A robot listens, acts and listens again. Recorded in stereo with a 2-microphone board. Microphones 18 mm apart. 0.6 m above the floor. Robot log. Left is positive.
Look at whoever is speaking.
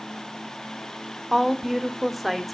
cmd yaw +30
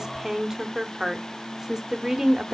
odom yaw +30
note: So it is at 30° right.
cmd yaw -30
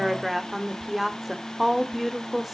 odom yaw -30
note: The woman speaking is now 10° right.
cmd yaw -10
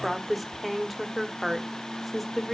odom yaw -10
end: Facing the woman speaking, 1 to 2 m away.